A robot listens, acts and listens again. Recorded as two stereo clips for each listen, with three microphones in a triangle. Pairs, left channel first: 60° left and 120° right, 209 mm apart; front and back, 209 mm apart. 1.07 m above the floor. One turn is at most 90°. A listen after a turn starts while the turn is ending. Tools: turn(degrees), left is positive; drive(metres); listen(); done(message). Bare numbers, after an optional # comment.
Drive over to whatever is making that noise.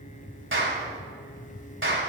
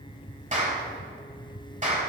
# The clap: 130° right.
turn(-90)
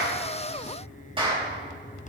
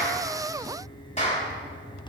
# The clap is now 55° right.
turn(-55)
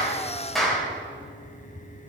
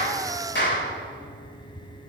# The clap is now 30° right.
turn(-30)
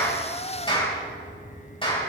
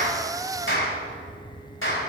drive(1.0)
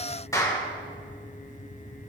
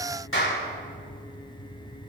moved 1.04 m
# The clap is now 15° right.
turn(-15)
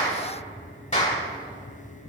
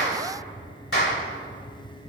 drive(1.0)
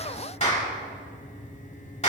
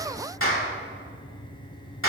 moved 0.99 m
drive(1.0)
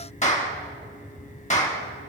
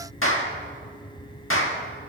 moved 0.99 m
drive(1.0)
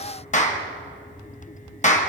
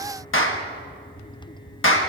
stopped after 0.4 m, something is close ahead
done("I am next to the clap.")